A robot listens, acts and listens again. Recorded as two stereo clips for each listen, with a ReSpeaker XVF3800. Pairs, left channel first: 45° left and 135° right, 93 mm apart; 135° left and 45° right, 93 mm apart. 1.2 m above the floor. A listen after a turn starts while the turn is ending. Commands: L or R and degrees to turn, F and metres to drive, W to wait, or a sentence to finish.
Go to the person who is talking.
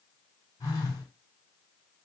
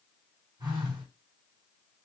W
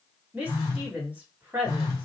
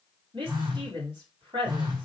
R60
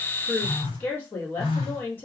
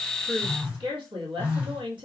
R20
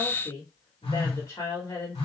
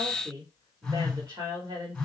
F1.0
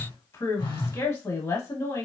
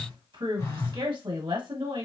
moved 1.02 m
F1.0
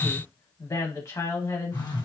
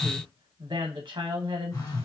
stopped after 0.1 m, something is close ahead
I am next to the woman speaking.